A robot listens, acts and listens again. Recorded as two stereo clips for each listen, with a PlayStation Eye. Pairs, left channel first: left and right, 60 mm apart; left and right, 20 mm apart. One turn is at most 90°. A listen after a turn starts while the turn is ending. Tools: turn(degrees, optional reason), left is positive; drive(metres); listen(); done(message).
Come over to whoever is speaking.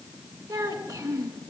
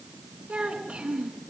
turn(degrees=-90)
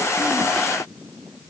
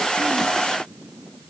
listen()
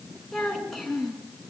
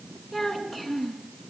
drive(metres=1.0)
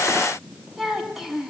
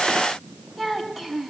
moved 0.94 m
drive(metres=1.0)
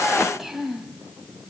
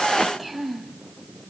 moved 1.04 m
drive(metres=1.0)
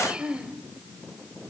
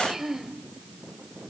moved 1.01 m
turn(degrees=-20, reason="The child speaking is now 20° right.")
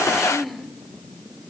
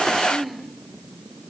drive(metres=1.0)
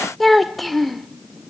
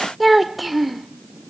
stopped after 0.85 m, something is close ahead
done("I am next to the child speaking.")